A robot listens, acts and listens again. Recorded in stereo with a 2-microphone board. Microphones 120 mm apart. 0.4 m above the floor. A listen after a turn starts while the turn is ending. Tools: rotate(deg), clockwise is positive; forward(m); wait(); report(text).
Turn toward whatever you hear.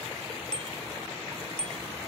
rotate(-30)
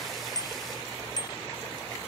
rotate(-145)
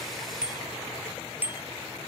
rotate(15)
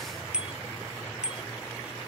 rotate(10)
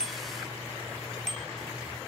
report("Found it: a bicycle bell, straight ahead.")